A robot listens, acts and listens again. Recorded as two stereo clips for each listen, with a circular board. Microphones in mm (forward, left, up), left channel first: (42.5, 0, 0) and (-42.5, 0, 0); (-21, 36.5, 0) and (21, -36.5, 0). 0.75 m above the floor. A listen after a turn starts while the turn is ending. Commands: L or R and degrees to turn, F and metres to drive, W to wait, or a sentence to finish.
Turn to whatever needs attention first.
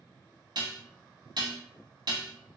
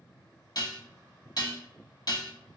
W
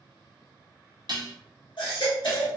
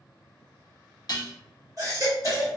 R15
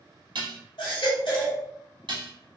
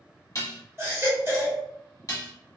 Facing the baby crying, 1 to 2 m away.